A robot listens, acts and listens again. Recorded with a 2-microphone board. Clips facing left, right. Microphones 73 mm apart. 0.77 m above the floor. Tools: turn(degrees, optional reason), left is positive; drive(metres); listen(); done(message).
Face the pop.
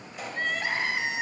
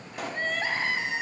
turn(degrees=-60, reason="The pop: about 60° right or 120° right.")
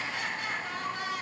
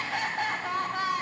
listen()
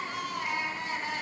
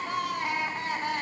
done("I heard a pop, but can't make it out now. It was about straight ahead or 60° right.")